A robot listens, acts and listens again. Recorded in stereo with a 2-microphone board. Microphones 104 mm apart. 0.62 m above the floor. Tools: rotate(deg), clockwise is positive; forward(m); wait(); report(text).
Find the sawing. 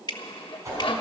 rotate(-55)
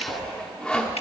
rotate(-10)
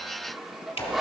report("Facing the sawing, 1 to 2 m away.")